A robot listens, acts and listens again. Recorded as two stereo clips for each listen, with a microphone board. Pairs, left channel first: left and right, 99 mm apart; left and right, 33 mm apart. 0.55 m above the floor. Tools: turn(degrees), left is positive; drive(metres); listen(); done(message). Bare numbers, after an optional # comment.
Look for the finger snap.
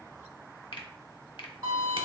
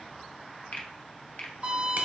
# The finger snap: about 60° left or 120° left.
turn(60)
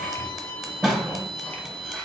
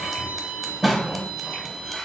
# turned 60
listen()
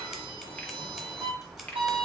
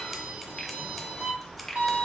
# So it is at 20° left.
turn(20)
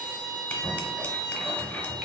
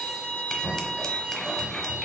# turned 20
listen()
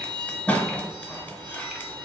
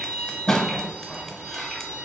listen()
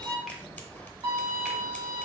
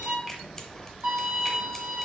done("I heard a finger snap from this way, but can't make it out now.")